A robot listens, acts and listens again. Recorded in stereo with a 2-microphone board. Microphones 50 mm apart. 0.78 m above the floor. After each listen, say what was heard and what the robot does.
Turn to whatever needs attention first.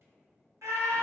The scream: about 65° right or 115° right. Turn 65° right.
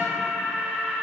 So it is at 20° right. Turn 20° right.
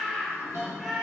Facing the scream.